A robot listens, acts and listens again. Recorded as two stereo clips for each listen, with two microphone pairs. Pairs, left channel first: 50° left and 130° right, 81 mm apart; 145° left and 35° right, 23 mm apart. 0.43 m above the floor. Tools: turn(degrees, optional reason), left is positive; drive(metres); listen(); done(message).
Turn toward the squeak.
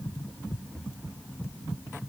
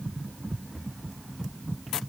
listen()
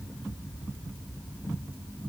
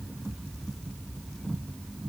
listen()
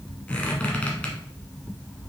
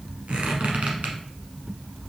turn(degrees=-25, reason="The squeak: 25° right.")
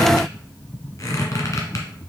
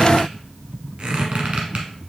done("Found it: a squeak, straight ahead, 1 to 2 m away.")